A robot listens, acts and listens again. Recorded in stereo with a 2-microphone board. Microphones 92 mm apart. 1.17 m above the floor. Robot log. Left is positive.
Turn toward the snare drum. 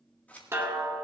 note: The snare drum: about 30° right or 150° right.
cmd yaw -30
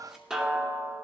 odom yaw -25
note: So it is at 10° right.
cmd yaw -10
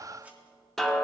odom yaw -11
end: Facing the snare drum, 2 to 4 m away.